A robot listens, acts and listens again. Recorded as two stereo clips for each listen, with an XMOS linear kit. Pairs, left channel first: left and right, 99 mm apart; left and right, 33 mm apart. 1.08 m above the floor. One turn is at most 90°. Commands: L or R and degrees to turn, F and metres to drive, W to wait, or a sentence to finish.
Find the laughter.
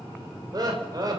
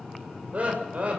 R40
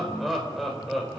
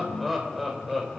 Found it: laughter, straight ahead, over 4 m away.